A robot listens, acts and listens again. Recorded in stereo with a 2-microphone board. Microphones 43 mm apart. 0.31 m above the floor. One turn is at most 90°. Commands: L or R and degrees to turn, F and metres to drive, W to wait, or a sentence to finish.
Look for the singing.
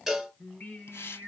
L55
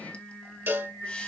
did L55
L65
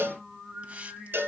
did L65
L10
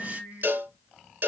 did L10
Found it: singing, straight ahead, 2 to 4 m away.